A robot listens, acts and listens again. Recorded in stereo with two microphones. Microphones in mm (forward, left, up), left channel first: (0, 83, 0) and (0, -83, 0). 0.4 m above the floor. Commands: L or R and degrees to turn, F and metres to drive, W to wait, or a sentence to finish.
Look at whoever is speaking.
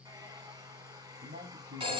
R65
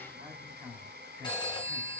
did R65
R15
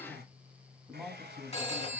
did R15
Found it: a man speaking, straight ahead, 2 to 4 m away.